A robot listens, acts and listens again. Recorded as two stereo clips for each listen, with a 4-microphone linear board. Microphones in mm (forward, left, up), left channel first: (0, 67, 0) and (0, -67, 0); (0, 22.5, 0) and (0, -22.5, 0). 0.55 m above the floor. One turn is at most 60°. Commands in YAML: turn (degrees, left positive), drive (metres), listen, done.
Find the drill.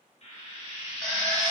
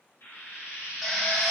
turn: 30
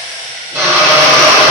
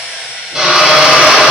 turn: -20
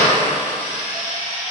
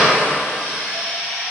listen: true
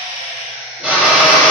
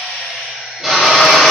turn: -10
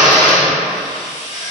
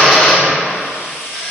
done: "Facing the drill."